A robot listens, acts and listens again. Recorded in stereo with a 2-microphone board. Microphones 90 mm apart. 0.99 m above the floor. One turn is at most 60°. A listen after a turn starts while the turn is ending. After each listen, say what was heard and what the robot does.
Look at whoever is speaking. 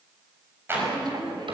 The woman speaking: about 55° right or 125° right. Turn 55° right.
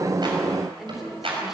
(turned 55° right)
Found it: a woman speaking, straight ahead, 2 to 4 m away.